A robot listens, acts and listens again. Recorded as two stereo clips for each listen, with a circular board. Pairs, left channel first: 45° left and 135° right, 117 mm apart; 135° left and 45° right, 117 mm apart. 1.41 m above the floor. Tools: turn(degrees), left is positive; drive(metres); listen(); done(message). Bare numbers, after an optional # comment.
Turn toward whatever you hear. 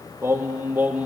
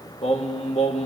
# The singing: 150° left.
turn(150)
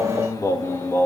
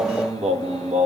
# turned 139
# The singing is now 25° right.
turn(-25)
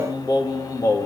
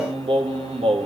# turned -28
# The singing is now 15° right.
turn(-15)
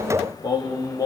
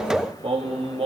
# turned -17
# The singing is now 15° right.
turn(-15)
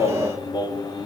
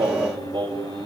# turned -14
done("Found it: singing, straight ahead.")